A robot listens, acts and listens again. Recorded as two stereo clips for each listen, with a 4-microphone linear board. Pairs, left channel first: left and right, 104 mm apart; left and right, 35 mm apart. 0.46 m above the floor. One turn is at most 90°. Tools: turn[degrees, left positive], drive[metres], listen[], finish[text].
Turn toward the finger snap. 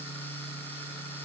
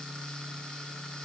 Action: listen[]
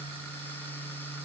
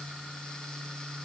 Action: listen[]
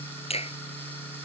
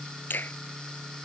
Thought: The finger snap: about 70° left or 110° left.
Action: turn[70]
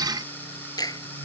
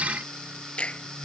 Thought: So it is at 35° left.
Action: turn[35]
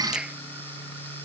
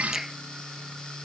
Thought: The finger snap is now 10° right.
Action: turn[-10]
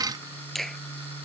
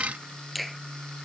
Action: finish[Found it: a finger snap, straight ahead.]